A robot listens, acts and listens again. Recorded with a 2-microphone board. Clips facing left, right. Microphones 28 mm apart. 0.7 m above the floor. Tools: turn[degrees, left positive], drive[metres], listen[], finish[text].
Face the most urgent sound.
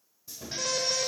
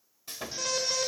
Action: turn[30]
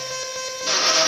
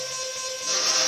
Thought: So it is at 150° left.
Action: turn[150]
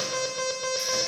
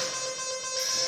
Thought: The alarm is now 30° left.
Action: turn[30]
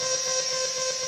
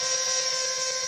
Action: finish[Facing the alarm.]